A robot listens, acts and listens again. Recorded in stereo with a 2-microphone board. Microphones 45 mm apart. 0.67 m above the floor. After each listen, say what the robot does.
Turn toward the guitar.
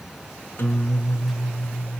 Turn 70° left.
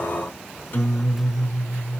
Turn 40° left.
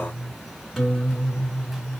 Facing the guitar, 1 to 2 m away.